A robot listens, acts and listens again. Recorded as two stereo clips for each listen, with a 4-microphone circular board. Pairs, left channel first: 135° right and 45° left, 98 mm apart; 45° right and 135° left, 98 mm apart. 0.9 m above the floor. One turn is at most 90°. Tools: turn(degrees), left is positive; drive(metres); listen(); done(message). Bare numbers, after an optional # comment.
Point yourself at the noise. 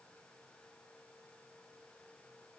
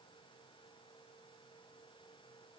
listen()
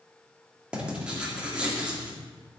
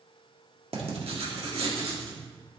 # The writing: 125° left.
turn(90)
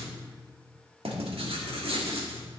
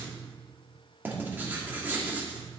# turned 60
# The writing is now 65° left.
turn(65)
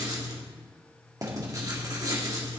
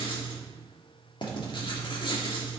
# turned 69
done("Facing the writing, 1 to 2 m away.")